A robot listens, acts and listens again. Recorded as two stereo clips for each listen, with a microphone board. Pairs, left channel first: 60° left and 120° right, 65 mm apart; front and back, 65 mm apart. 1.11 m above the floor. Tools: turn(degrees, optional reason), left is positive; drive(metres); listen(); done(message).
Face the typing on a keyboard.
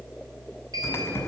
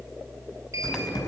done("Found it: typing on a keyboard, straight ahead, over 4 m away.")